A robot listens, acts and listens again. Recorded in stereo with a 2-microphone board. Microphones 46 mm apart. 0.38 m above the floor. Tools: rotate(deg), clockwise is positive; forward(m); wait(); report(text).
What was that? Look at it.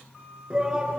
rotate(15)
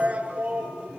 rotate(150)
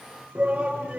rotate(30)
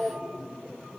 report("Found it: a shout, straight ahead.")